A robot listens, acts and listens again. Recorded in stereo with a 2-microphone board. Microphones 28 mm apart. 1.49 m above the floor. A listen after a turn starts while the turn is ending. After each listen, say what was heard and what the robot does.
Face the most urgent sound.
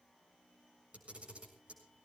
Keep listening.
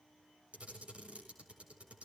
Keep listening.
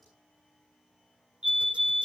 The fire alarm: about 30° right or 150° right. Turn 30° right.
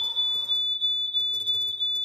Found it: a fire alarm, straight ahead.